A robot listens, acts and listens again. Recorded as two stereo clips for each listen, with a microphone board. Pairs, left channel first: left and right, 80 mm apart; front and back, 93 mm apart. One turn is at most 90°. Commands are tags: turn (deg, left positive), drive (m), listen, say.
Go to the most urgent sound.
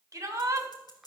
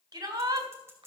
<turn deg="-90"/>
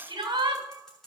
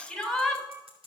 <turn deg="-85"/>
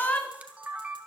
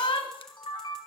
<turn deg="15"/>
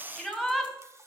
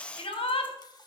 <drive m="1.0"/>
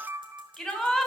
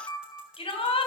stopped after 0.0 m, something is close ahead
<say>Blocked. The shout is further on, straight ahead.</say>